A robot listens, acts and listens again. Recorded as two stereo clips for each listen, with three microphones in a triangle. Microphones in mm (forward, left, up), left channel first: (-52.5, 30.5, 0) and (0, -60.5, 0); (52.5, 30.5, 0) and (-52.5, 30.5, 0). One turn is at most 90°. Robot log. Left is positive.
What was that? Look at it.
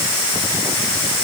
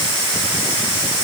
cmd idle
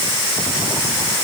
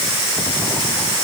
cmd idle
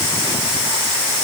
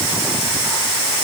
end: I can't make out anything to turn to.